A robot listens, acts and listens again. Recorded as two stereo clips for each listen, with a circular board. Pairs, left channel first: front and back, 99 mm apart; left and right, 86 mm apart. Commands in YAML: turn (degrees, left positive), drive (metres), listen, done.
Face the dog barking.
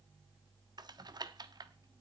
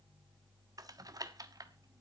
listen: true
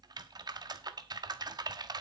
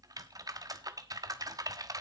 listen: true
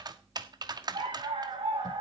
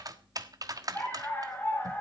turn: 155
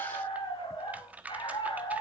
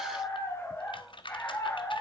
turn: 30
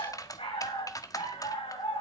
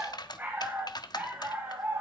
turn: -20
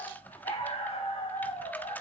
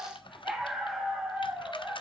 done: "Facing the dog barking, over 4 m away."